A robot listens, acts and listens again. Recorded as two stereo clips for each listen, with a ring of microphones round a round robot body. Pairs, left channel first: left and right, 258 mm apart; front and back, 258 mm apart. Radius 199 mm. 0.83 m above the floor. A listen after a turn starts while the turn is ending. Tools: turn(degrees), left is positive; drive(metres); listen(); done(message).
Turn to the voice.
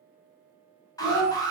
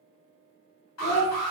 turn(degrees=50)
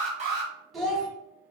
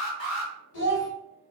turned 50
done("Facing the child speaking, 1 to 2 m away.")